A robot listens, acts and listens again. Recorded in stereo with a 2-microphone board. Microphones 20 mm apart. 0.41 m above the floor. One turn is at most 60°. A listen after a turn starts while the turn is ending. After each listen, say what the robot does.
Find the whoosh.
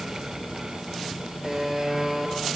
Keep listening.
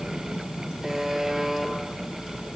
Keep listening.
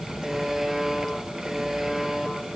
I can't make out a whoosh, only a buzzer.